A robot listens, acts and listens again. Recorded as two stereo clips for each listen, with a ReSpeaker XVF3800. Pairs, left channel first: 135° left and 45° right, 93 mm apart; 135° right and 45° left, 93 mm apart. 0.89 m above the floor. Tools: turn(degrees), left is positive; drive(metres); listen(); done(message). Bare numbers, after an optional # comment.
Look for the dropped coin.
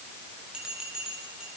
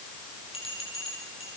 listen()
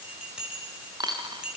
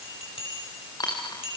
# The dropped coin: 90° right.
turn(-90)
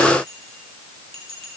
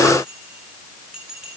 done("I heard a dropped coin from this way, but can't make it out now.")